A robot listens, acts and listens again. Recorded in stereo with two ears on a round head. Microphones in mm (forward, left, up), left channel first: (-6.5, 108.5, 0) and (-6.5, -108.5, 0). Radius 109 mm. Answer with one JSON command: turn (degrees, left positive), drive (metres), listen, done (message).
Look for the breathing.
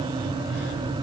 {"listen": true}
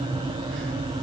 {"listen": true}
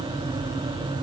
{"done": "I can't make out breathing to turn to."}